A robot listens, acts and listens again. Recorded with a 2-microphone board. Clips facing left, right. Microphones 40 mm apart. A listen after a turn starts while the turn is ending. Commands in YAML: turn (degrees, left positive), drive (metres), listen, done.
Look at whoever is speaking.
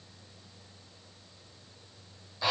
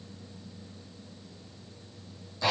listen: true
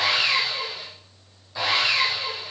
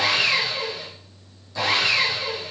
listen: true
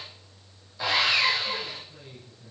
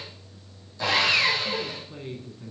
turn: -45
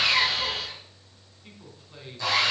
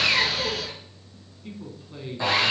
done: "Found it: a man speaking, straight ahead, 2 to 4 m away."